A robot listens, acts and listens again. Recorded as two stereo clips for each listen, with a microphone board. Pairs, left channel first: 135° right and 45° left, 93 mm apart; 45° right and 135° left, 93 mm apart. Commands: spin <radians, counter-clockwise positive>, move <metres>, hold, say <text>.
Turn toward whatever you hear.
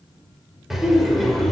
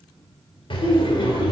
spin -0.87
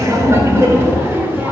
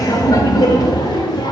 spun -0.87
spin -0.35
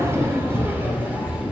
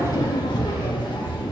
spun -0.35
spin -0.52
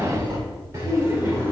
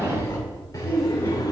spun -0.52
spin -0.17
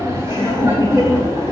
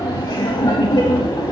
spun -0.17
say Facing the laughter, 1 to 2 m away.